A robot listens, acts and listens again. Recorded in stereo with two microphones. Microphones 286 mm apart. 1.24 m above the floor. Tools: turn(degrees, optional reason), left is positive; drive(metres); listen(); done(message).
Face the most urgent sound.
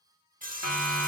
turn(degrees=90)
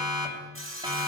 turn(degrees=-15, reason="So it is at 15° right.")
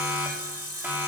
done("Facing the siren.")